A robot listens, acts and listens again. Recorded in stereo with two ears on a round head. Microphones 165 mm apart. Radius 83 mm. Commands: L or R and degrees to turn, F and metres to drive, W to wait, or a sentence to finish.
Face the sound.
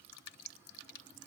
W
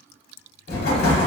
L60
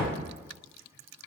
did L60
W
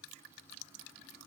I heard an explosion, but can't make it out now. It was about straight ahead or 60° left.